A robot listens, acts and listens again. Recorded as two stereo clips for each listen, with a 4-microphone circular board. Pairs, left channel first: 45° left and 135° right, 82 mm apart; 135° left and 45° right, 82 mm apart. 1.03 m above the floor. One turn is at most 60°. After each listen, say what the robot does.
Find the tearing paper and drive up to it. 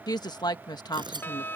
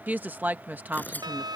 Turn 60° right.
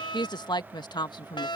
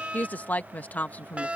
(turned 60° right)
Turn 60° right.
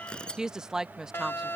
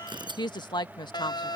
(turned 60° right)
Turn 30° right.
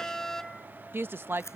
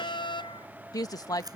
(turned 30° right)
Turn 10° right.
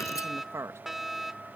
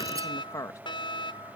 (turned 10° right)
Keep listening.
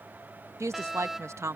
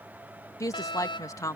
Keep listening.
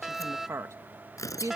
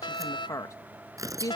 Drive 1.0 m forward.
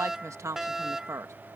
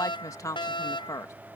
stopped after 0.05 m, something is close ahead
Keep listening.
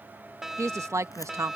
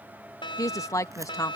Keep listening.
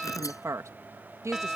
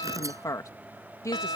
Facing where the tearing paper came from. I can't hear it now. I did not reach it.